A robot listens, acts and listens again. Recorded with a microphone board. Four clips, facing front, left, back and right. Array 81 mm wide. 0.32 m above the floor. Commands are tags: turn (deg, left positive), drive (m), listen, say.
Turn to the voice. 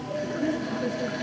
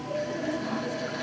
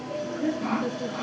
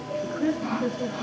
<turn deg="-90"/>
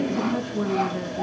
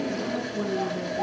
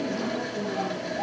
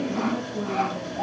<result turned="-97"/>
<turn deg="10"/>
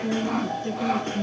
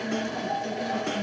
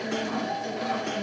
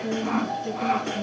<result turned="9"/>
<say>Found it: a woman speaking, straight ahead.</say>